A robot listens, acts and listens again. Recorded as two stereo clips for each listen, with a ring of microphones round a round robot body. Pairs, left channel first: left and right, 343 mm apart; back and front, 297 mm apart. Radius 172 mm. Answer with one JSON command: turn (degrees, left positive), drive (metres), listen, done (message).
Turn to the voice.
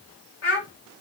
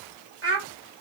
{"turn": 45}
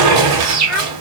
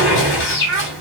{"done": "Found it: a child speaking, straight ahead."}